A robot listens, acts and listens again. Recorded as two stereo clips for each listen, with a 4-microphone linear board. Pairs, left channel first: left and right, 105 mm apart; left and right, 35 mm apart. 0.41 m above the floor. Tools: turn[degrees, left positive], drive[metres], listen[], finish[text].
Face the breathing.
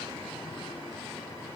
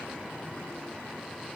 Action: listen[]
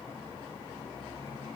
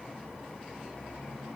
Action: listen[]
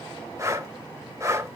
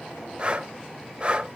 Thought: The breathing: about 30° right or 150° right.
Action: turn[-30]
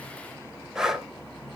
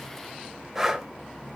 Action: finish[Facing the breathing.]